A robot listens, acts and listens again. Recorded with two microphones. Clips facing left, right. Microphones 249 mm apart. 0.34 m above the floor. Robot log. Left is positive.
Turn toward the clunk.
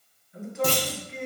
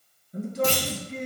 note: The clunk: about 55° left or 125° left.
cmd yaw +55
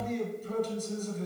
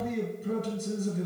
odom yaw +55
cmd idle
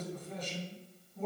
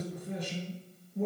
end: I heard a clunk, but can't make it out now. It was about straight ahead or 70° left.